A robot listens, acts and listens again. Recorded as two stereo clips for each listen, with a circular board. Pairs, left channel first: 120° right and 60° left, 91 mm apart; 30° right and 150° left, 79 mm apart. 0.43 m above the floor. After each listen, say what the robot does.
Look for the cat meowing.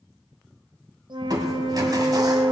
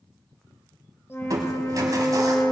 Keep listening.
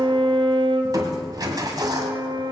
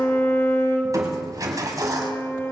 Keep listening.
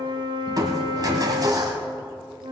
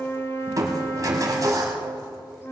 I can't make out a cat meowing, only a flute and crushing.